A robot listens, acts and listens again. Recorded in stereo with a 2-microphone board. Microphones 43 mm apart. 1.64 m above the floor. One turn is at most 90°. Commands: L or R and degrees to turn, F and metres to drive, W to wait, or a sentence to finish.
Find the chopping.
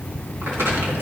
W
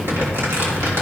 W
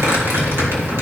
I can't make out chopping to turn to.